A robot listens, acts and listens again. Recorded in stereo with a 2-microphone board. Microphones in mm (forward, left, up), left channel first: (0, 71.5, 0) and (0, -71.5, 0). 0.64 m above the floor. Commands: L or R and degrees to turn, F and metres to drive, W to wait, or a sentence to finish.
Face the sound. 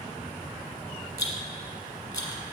L25
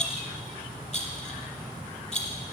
L130
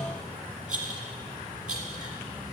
Facing the rattle.